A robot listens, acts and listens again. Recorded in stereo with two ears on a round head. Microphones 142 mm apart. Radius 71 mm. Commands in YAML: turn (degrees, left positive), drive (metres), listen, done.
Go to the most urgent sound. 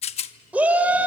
turn: -30
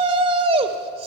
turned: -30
turn: -140
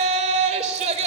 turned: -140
turn: -45
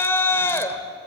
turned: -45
turn: 15
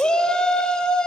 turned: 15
drive: 1.0
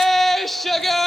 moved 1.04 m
drive: 1.0
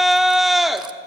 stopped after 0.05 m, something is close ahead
done: "Arrived at the shout, straight ahead."